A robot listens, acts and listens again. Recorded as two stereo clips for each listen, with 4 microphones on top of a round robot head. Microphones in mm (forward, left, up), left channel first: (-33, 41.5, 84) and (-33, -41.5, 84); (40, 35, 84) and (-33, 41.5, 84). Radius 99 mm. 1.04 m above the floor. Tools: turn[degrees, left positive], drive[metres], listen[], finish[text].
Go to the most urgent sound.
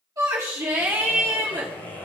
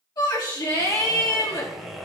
Thought: The shout: 40° right.
Action: turn[-40]
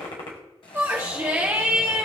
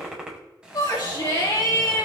Thought: The shout is now 25° right.
Action: turn[-25]
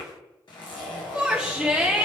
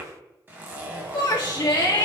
Thought: The shout is now 10° right.
Action: turn[-10]
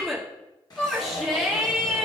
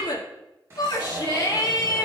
Action: drive[1.0]
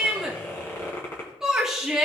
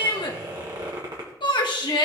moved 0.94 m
Action: drive[1.0]
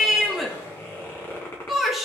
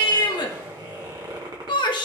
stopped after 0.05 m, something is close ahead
Action: finish[Arrived at the shout, straight ahead.]